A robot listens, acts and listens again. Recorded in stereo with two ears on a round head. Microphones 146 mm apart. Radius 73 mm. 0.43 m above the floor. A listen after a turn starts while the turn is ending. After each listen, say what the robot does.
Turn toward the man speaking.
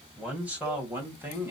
Turn 30° right.
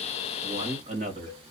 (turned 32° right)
Turn 130° right.
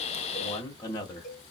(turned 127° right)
Turn 30° left.
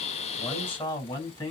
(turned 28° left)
Turn 15° left.
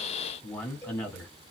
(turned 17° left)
Found it: a man speaking, straight ahead.